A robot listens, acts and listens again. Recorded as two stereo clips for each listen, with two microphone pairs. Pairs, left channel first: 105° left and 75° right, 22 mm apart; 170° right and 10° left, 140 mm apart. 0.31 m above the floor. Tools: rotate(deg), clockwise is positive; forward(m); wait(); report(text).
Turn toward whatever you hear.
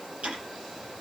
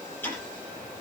rotate(95)
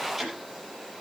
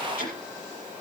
rotate(-10)
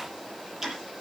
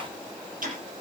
report("Facing the ticking, over 4 m away.")